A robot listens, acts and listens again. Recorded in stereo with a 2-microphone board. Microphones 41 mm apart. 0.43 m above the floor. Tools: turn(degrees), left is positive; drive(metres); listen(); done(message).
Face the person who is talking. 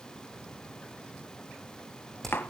listen()
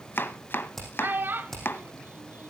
turn(degrees=-55)
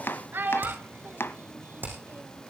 turn(degrees=-60)
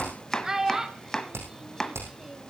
turn(degrees=-10)
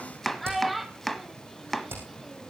done("Found it: a child speaking, straight ahead, 1 to 2 m away.")